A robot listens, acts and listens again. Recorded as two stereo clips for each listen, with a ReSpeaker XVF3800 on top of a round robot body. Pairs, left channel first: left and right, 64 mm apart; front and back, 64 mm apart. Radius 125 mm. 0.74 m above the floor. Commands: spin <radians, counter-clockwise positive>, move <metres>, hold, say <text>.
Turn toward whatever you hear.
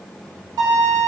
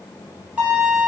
spin -1.92
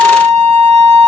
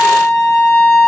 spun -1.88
say Found it: a violin, straight ahead.